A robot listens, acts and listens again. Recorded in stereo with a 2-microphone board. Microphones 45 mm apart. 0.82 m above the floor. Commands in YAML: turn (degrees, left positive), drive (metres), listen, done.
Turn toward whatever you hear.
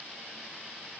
listen: true
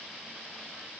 listen: true
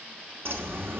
turn: -65
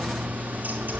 turn: -50
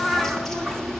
done: "Found it: a bird, straight ahead."